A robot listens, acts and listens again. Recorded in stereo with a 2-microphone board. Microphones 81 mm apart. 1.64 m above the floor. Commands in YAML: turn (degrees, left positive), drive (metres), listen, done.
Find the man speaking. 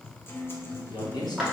turn: 55
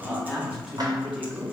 done: "Facing the man speaking."